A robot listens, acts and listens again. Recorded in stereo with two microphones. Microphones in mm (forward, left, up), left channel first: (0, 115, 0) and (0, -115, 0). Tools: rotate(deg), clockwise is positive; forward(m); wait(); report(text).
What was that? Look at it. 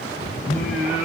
rotate(-35)
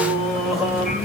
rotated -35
report("Found it: singing, straight ahead, 1 to 2 m away.")